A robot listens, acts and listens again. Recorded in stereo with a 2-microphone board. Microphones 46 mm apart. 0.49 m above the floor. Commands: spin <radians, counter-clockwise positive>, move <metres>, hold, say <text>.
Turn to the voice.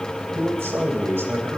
spin -1.13
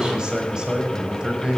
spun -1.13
spin -0.35
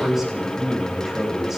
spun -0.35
spin -0.17
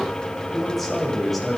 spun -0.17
say Facing the man speaking.